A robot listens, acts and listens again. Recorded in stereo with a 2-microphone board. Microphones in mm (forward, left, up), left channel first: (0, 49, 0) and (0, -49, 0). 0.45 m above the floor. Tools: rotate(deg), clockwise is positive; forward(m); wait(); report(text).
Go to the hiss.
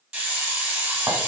rotate(30)
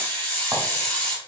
rotate(-20)
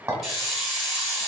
forward(1.0)
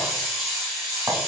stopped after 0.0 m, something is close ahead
report("Something is in my way. I am facing the hiss but have not reached it.")